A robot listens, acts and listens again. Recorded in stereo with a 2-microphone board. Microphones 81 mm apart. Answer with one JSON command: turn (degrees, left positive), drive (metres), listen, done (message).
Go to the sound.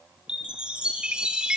{"turn": -30}
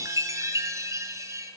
{"turn": -140}
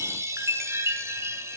{"turn": -35}
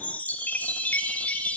{"turn": 20}
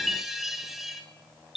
{"drive": 1.0}
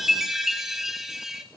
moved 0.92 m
{"drive": 1.0}
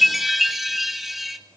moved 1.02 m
{"drive": 1.0}
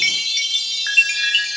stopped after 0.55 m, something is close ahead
{"done": "Arrived at the chime, straight ahead."}